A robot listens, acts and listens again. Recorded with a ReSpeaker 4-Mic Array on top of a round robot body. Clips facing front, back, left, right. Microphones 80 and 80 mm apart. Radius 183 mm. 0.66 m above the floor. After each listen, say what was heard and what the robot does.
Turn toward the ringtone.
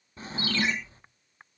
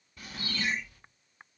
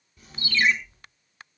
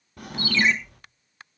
The ringtone: 10° left. Turn 10° left.
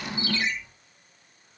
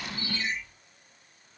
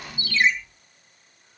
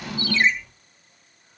Facing the ringtone, 2 to 4 m away.